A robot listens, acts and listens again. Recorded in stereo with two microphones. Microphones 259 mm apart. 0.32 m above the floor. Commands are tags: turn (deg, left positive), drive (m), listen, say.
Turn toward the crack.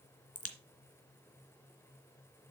<turn deg="55"/>
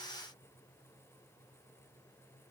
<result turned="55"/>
<listen/>
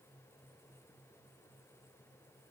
<say>I heard a crack, but can't make it out now. It was about straight ahead or 70° left.</say>